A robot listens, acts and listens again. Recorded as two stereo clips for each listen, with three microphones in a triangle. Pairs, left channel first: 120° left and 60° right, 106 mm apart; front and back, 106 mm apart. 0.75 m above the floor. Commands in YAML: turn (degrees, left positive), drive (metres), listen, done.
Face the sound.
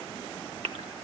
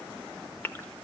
turn: -70
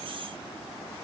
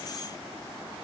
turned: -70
done: "I heard a gasp from this way, but can't make it out now."